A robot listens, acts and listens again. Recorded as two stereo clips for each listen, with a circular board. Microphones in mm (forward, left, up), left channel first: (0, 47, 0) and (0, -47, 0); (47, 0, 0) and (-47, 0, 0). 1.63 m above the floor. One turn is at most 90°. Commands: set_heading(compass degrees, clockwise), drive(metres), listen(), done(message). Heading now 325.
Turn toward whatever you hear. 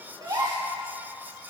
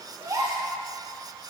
set_heading(55)
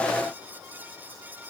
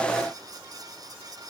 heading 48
set_heading(98)
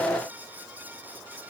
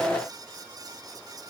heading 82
set_heading(97)
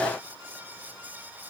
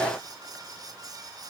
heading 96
done("I heard a gasp from this way, but can't make it out now.")